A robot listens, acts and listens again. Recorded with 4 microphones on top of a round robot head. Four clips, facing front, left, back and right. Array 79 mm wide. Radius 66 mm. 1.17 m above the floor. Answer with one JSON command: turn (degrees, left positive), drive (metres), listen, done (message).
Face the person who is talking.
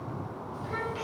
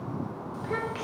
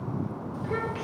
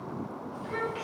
{"turn": 90}
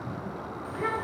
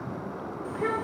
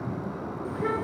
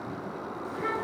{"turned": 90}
{"turn": 30}
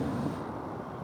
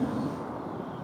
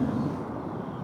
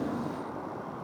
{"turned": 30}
{"done": "Facing the child speaking."}